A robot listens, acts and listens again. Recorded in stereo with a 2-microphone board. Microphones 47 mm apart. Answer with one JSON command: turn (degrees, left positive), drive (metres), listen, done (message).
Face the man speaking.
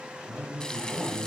{"turn": 30}
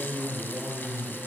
{"turn": -30}
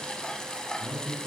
{"done": "Facing the man speaking."}